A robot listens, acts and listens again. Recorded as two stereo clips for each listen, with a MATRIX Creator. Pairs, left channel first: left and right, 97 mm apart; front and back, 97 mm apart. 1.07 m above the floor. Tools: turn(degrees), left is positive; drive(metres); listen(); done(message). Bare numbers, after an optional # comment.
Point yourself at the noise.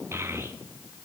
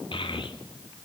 # The child speaking: 25° right.
turn(-25)
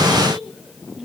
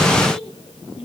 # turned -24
listen()
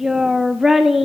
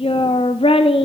done("Facing the child speaking.")